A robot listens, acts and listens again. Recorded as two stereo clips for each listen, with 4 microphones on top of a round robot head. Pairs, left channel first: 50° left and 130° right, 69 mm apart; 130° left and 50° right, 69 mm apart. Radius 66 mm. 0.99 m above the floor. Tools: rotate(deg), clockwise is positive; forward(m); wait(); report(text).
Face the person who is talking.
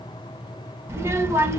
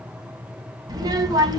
rotate(75)
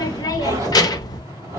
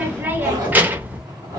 rotate(-20)
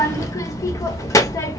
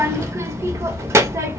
report("Facing the child speaking.")